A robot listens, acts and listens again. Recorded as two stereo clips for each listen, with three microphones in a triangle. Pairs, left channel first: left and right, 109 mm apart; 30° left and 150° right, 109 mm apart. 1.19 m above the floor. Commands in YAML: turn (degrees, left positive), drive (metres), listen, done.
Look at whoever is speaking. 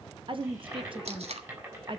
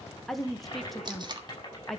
turn: -60
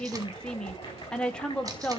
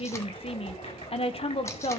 turn: 10
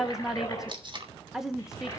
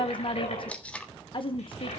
done: "Found it: a woman speaking, straight ahead, 1 to 2 m away."